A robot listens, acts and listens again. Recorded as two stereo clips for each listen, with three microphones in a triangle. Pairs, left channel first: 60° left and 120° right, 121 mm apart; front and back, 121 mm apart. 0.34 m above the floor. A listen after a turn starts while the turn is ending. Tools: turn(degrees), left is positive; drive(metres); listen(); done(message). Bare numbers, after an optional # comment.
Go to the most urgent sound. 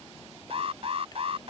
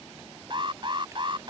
# The alarm: 140° right.
turn(-140)
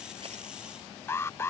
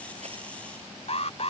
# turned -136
drive(1.0)
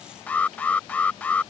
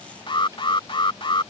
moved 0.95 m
# The alarm is now 15° right.
turn(-15)
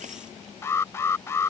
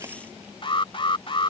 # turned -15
drive(1.0)
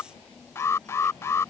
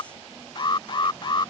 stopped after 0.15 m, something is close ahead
done("Arrived at the alarm, straight ahead.")